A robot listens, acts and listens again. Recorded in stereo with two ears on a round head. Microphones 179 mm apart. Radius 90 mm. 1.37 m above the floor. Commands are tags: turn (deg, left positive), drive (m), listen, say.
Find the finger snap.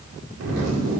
<listen/>
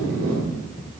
<listen/>
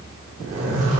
<say>I can't make out a finger snap, only a zipper.</say>